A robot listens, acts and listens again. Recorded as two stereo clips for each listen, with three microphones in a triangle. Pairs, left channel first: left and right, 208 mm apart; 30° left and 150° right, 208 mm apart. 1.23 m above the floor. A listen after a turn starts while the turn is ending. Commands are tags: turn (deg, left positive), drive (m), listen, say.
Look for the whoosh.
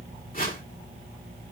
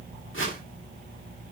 <turn deg="45"/>
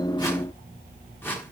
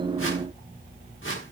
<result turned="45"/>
<turn deg="10"/>
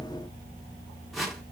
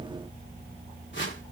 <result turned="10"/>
<say>Found it: a whoosh, straight ahead.</say>